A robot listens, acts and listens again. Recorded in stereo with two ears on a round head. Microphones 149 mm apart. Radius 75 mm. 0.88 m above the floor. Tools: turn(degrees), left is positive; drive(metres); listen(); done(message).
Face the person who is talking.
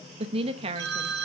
turn(degrees=-35)
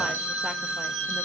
listen()
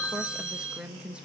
turn(degrees=-10)
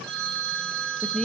done("Found it: a woman speaking, straight ahead.")